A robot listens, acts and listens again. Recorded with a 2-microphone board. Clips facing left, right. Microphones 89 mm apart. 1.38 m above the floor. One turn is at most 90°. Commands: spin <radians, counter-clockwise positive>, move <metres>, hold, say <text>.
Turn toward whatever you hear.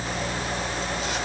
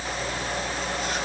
hold
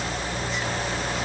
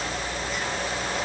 hold
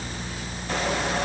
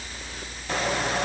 say I can't make out anything.